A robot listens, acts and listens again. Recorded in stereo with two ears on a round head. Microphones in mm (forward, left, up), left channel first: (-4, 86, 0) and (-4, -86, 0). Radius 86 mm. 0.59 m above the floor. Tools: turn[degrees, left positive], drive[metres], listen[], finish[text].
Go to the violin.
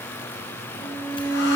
Thought: The violin: about 15° left or 165° left.
Action: turn[15]
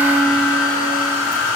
Action: listen[]
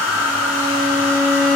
Action: drive[1.0]
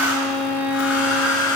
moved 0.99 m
Action: drive[1.0]
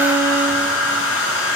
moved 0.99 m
Action: listen[]
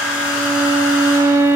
Thought: The violin is now 15° right.
Action: turn[-15]
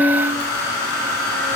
Action: drive[1.0]
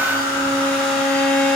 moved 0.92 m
Action: drive[1.0]
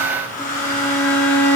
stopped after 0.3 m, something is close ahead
Thought: The violin is now 10° left.
Action: turn[10]
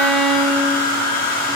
Action: finish[I am next to the violin.]